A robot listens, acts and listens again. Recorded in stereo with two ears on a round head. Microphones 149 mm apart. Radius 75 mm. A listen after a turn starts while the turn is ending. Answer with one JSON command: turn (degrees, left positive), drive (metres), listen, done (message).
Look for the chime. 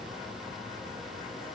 {"listen": true}
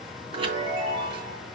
{"turn": -30}
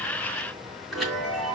{"done": "Found it: a chime, straight ahead, 2 to 4 m away."}